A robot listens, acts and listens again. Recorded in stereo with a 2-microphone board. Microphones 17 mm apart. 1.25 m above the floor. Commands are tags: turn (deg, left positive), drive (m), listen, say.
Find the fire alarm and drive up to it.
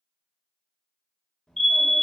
<turn deg="40"/>
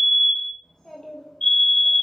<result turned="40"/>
<turn deg="90"/>
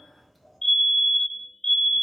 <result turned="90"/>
<turn deg="30"/>
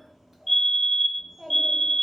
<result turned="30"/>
<turn deg="10"/>
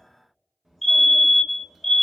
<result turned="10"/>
<drive m="1.0"/>
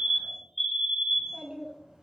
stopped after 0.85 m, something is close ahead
<say>I am next to the fire alarm.</say>